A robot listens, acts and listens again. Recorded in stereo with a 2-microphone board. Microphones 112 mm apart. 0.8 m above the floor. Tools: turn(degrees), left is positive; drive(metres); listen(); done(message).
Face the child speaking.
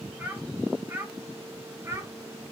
turn(degrees=-30)
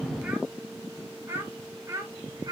turn(degrees=-35)
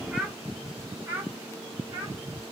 turn(degrees=-30)
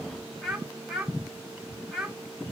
done("Facing the child speaking.")